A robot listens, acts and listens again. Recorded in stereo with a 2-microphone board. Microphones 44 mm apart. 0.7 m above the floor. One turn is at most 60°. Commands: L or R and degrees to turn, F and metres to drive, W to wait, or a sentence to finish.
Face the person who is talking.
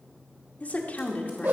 L40
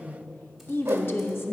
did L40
L60
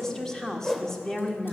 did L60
L10
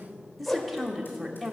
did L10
Found it: a woman speaking, straight ahead.